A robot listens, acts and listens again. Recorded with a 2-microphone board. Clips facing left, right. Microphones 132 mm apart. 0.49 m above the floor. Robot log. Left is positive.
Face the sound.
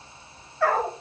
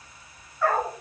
cmd yaw +90
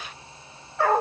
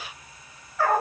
note: So it is at 25° left.
cmd yaw +25
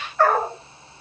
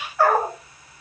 end: Facing the dog barking.